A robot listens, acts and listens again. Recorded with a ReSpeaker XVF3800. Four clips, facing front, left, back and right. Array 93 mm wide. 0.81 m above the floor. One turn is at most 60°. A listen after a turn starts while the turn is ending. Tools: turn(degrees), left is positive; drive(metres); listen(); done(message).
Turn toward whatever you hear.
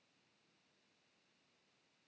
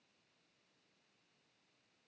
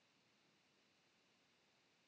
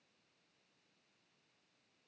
listen()
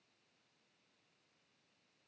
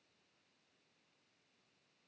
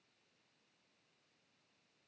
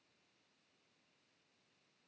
listen()
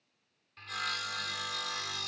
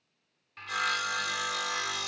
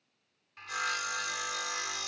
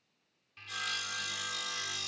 turn(degrees=60)
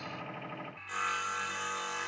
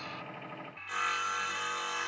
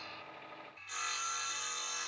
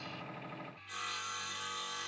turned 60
turn(degrees=60)
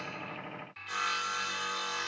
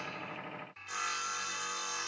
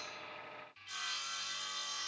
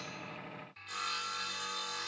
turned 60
turn(degrees=15)
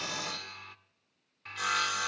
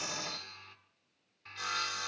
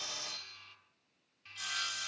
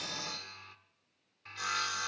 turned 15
done("Facing the sawing.")